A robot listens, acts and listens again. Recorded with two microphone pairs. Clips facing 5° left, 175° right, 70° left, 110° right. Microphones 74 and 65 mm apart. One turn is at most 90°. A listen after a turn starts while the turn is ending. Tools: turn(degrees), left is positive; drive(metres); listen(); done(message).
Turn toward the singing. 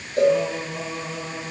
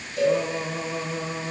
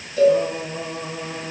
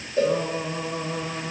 turn(degrees=-90)
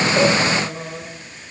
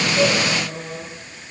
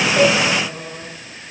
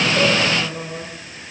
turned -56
turn(degrees=-65)
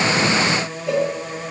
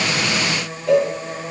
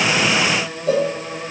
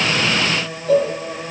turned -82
turn(degrees=10)
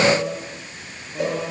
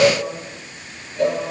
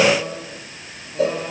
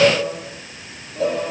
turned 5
done("Facing the singing.")